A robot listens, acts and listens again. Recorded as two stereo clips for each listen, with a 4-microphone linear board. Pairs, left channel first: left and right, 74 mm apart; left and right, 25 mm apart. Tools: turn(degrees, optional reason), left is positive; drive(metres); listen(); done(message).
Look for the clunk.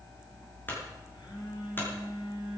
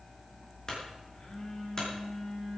turn(degrees=25, reason="The clunk: about 25° left or 155° left.")
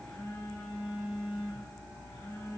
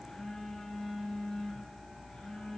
listen()
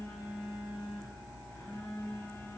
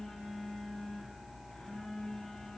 done("I heard a clunk, but can't make it out now. It was about straight ahead or 130° left.")